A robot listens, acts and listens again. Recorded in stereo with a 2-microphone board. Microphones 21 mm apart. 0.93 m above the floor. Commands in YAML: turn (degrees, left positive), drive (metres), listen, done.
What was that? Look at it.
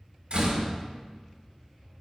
turn: -65
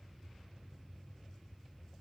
listen: true
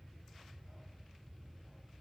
done: "I heard a door slam, but can't make it out now. It was about straight ahead or 50° right."